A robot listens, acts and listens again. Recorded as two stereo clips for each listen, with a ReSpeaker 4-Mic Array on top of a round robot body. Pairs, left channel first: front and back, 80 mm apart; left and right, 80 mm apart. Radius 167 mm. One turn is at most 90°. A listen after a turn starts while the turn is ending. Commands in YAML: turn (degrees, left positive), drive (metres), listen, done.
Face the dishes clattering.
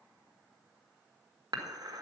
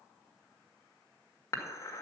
turn: 90
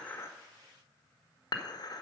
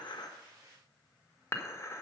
turn: 35
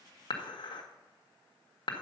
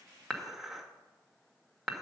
done: "Found it: dishes clattering, straight ahead."